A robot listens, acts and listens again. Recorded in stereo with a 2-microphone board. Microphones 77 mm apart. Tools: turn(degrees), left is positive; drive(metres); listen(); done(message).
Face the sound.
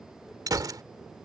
turn(degrees=-60)
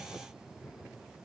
listen()
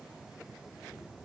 done("I heard a gunshot, but can't make it out now. It was about straight ahead or 60° right.")